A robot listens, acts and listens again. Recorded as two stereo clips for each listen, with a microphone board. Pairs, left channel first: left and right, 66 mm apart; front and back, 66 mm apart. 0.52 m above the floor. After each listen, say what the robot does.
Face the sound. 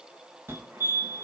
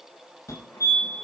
Turn 35° right.
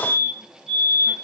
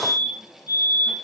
Found it: a fire alarm, straight ahead, over 4 m away.